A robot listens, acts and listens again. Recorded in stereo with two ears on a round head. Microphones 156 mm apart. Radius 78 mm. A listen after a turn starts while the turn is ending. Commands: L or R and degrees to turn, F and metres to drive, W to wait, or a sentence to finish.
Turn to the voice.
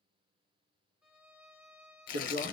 R60
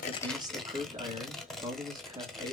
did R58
R30
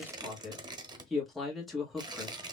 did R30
Facing the man speaking, 1 to 2 m away.